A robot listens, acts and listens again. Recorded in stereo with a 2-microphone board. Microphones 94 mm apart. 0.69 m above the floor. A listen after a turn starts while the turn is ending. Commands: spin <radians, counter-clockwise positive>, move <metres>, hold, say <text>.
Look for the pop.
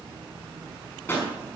spin 0.44
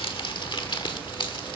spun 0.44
hold
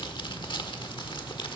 say I heard a pop, but can't make it out now. It was about straight ahead or 130° left.